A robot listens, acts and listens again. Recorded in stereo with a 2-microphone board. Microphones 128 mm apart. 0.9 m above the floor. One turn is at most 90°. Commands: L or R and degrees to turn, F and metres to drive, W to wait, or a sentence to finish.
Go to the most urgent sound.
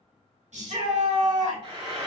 R65
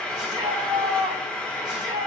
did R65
R40
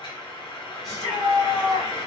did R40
F1.0
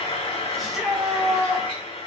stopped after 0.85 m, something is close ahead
Arrived at the shout, straight ahead.